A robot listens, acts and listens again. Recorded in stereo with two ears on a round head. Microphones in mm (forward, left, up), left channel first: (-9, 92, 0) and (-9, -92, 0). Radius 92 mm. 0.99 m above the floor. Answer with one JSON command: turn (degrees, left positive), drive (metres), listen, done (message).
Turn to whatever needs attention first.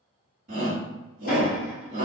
{"turn": -40}
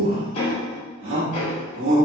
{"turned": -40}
{"turn": -90}
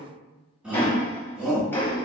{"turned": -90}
{"done": "Facing the shout, 1 to 2 m away."}